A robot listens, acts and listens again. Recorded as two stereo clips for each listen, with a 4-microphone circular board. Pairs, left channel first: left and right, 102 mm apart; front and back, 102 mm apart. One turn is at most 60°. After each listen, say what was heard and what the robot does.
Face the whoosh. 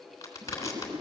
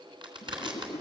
The whoosh: 85° right. Turn 60° right.
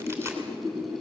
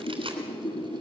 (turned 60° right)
The whoosh is now 25° right. Turn 25° right.
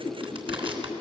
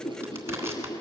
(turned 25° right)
The whoosh is now 15° left. Turn 15° left.
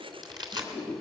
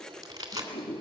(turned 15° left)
Facing the whoosh.